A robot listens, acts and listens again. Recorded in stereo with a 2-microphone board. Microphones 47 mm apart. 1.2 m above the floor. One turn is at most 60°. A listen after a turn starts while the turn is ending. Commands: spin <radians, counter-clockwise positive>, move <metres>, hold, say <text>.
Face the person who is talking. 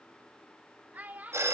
spin -0.61
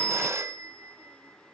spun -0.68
hold
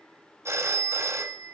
hold
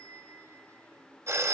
say I heard a child speaking, but can't make it out now. It was about 5° left or 105° right.